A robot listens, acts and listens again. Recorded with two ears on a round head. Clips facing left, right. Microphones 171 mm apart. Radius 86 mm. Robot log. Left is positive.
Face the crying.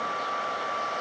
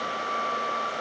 cmd idle
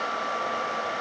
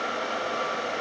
cmd idle
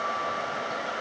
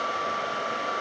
end: I can't make out crying to turn to.